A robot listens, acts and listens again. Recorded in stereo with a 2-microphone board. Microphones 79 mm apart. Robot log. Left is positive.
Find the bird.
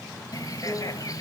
note: The bird: about 50° left or 130° left.
cmd yaw +50
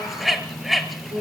end: Facing the bird, 2 to 4 m away.